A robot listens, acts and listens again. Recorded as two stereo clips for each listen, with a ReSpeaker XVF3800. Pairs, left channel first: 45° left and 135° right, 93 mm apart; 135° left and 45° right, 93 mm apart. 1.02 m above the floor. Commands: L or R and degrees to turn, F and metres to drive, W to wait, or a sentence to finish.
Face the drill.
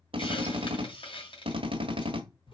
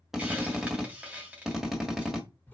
R130
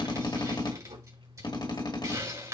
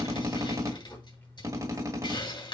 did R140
L10
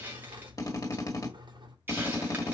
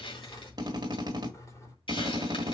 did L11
Found it: a drill, straight ahead.